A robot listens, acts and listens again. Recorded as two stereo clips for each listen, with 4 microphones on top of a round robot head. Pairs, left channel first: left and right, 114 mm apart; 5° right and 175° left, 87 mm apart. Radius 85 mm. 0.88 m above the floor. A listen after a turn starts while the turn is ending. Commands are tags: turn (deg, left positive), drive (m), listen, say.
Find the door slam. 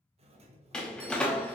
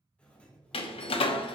<say>Facing the door slam, under 1 m away.</say>